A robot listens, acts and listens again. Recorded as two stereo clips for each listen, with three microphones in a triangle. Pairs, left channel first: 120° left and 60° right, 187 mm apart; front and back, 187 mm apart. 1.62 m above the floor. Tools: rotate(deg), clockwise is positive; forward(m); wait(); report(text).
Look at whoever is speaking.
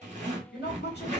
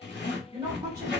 rotate(-110)
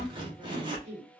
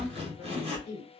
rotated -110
report("Facing the woman speaking, 1 to 2 m away.")